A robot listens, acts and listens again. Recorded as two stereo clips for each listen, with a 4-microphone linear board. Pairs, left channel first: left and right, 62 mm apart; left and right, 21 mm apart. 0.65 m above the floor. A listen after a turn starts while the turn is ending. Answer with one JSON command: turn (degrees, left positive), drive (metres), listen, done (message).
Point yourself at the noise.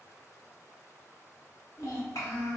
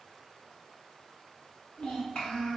{"turn": 65}
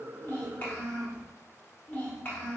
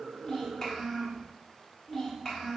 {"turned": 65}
{"turn": 35}
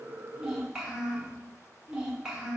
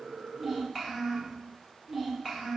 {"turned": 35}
{"turn": -15}
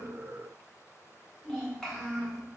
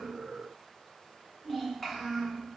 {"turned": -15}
{"done": "Facing the child speaking, 1 to 2 m away."}